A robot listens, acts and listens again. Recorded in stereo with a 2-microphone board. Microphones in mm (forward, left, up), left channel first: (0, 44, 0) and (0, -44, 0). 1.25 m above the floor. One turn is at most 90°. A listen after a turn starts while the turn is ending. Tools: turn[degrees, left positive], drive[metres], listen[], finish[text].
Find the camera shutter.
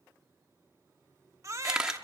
Action: turn[-30]
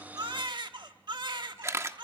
Thought: So it is at 140° right.
Action: turn[-90]
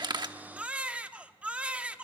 Thought: Nothing new. It was at 50° right.
Action: turn[-50]
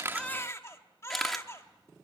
Action: finish[Facing the camera shutter.]